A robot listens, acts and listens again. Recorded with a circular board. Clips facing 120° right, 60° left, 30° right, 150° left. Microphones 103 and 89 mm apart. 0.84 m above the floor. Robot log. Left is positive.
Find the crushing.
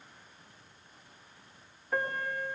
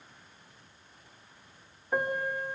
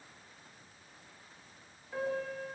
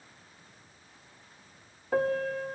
cmd idle
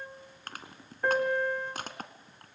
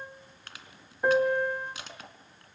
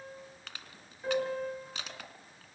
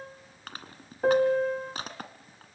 note: The crushing: 160° right.
cmd yaw -160
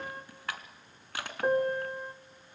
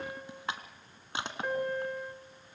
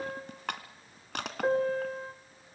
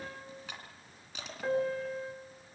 note: The crushing is now 10° right.
cmd yaw -10
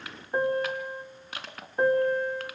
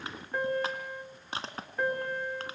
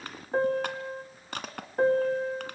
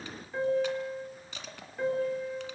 end: Facing the crushing, 2 to 4 m away.